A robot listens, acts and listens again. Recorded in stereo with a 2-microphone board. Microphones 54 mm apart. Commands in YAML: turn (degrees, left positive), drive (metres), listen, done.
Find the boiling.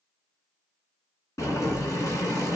turn: 90
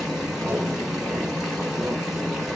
done: "Found it: boiling, straight ahead."